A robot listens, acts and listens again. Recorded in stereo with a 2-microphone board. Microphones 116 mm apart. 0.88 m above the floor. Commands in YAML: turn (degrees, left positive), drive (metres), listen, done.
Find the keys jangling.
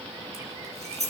turn: -70
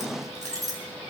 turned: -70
turn: -35
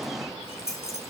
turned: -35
done: "Found it: keys jangling, straight ahead."